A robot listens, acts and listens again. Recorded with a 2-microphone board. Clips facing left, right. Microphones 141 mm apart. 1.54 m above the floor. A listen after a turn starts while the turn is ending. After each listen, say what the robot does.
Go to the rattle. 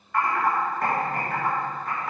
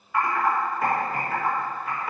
Keep listening.
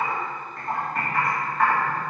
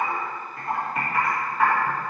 Keep listening.
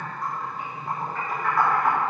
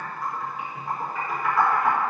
I can't make out a rattle, only typing on a keyboard.